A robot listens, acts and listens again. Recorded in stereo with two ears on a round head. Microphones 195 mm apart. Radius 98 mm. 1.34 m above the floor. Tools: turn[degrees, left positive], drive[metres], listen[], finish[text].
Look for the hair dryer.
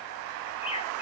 Action: listen[]
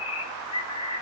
Action: listen[]
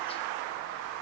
Action: finish[I can't make out a hair dryer, only a bird.]